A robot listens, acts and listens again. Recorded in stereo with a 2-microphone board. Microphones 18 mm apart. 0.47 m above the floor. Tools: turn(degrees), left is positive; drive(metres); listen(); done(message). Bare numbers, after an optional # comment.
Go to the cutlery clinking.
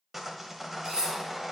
# The cutlery clinking: about 50° right or 130° right.
turn(-50)
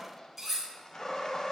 drive(1.0)
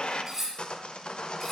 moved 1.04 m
drive(1.0)
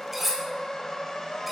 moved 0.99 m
drive(1.0)
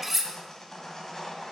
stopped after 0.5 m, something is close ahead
done("I am next to the cutlery clinking.")